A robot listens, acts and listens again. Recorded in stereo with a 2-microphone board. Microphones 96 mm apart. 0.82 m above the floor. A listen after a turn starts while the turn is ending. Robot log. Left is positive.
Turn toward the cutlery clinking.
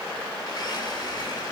cmd idle
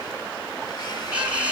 cmd yaw -30
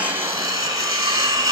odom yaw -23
note: So it is at 140° right.
cmd yaw -140
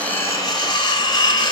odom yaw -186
note: The cutlery clinking is now 45° left.
cmd yaw +45
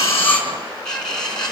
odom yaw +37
note: The cutlery clinking is now 10° left.
cmd yaw +10
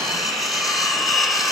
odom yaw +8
end: Facing the cutlery clinking, over 4 m away.